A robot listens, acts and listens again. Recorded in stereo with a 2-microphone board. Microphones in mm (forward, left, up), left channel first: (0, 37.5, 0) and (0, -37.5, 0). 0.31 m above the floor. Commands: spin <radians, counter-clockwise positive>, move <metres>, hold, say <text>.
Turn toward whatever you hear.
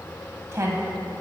spin -0.61
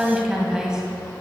spin -0.17
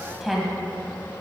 say Facing the woman speaking, 1 to 2 m away.